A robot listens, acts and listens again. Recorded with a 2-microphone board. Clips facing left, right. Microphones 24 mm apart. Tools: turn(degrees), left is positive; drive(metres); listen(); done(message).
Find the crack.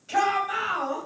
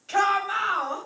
listen()
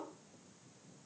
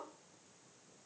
listen()
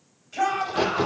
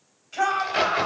turn(degrees=-70)
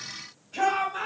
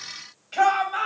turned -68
listen()
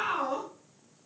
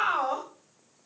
done("I heard a crack, but can't make it out now. It was about 5° right or 40° right.")